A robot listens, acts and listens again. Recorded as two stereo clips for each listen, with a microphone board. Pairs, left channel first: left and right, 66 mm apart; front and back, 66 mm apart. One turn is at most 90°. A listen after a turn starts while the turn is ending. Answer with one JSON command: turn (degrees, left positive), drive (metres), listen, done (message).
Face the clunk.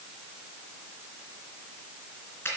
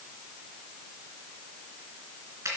{"listen": true}
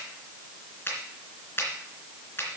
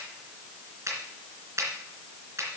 {"listen": true}
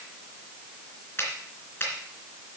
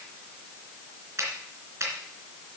{"done": "I can't make out a clunk to turn to."}